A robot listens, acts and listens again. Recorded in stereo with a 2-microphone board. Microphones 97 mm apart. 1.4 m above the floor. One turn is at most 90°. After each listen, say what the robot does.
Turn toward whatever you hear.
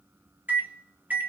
Turn 20° right.
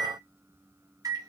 Turn 90° right.
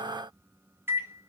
Turn 25° right.
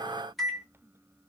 Found it: a microwave, straight ahead, under 1 m away.